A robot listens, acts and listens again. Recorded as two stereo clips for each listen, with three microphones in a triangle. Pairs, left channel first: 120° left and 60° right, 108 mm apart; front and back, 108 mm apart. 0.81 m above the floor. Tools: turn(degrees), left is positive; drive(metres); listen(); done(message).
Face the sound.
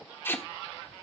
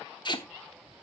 turn(degrees=50)
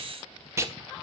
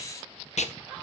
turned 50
done("Facing the tape being pulled.")